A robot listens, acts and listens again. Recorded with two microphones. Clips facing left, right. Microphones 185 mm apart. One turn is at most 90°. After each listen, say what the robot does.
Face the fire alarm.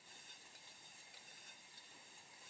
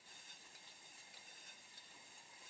Keep listening.
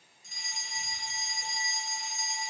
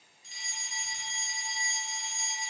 Turn 45° left.
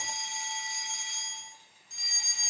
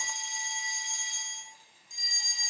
Turn 90° left.
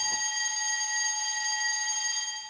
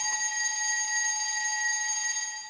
Turn 10° right.
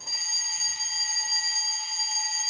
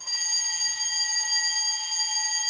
Facing the fire alarm, 2 to 4 m away.